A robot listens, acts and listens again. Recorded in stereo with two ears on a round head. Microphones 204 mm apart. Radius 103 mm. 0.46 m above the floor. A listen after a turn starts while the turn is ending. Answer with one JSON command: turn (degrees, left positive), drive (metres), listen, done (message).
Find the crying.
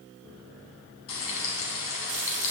{"listen": true}
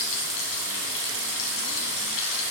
{"listen": true}
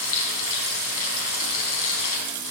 {"done": "I can't make out crying to turn to."}